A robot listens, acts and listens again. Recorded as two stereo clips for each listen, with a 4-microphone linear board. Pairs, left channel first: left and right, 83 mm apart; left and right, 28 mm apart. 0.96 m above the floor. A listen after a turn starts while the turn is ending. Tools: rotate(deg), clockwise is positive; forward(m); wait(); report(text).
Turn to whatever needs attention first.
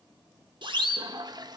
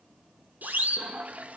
rotate(65)
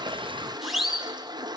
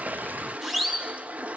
report("Facing the siren, 2 to 4 m away.")